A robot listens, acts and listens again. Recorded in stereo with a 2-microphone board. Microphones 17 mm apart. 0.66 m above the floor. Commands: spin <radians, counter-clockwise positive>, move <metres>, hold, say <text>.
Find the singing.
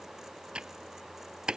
hold
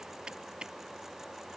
hold
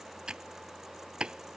say I can't make out singing to turn to.